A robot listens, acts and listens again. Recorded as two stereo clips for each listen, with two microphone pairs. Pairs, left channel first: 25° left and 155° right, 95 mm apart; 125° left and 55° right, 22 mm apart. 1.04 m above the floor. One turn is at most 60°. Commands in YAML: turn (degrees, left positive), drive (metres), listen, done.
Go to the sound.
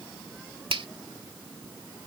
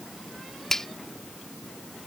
turn: -60
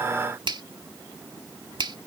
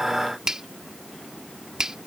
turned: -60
turn: -60
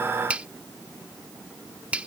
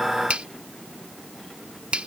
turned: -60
turn: -60
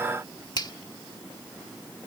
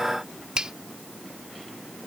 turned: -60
turn: -15
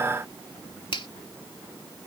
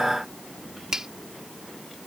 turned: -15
drive: 1.0
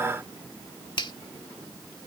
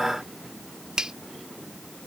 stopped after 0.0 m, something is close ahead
done: "Something is in my way. I am facing the finger snap but have not reached it."